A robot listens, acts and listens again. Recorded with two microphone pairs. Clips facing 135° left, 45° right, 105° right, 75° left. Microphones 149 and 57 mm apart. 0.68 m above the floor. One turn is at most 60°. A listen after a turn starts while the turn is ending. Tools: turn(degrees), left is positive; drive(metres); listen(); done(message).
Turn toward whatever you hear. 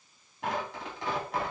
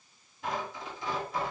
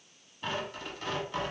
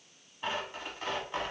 turn(degrees=60)
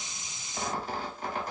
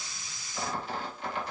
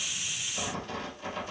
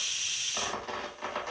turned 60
turn(degrees=60)
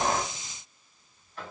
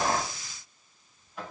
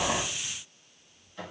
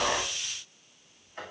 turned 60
turn(degrees=35)
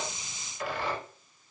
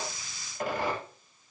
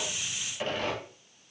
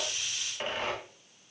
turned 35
done("Found it: tearing paper, straight ahead, 1 to 2 m away.")